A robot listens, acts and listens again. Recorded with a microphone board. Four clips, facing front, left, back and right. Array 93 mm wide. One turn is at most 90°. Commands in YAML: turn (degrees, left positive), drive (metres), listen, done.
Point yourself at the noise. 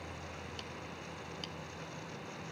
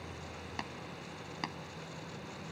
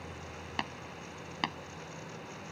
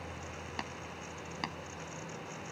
turn: -90
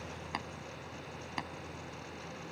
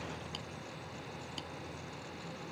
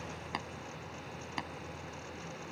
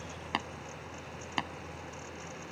turn: -90
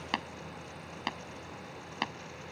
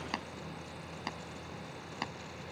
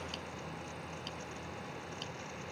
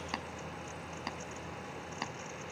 done: "Facing the tapping."